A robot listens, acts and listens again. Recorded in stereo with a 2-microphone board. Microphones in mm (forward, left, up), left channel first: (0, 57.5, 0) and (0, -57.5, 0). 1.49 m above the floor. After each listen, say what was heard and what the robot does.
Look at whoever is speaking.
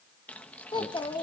The child speaking: about 40° left or 140° left. Turn 40° left.
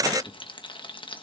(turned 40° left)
Keep listening.
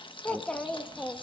So it is at 10° left. Turn 10° left.
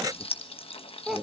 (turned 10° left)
Found it: a child speaking, straight ahead, 1 to 2 m away.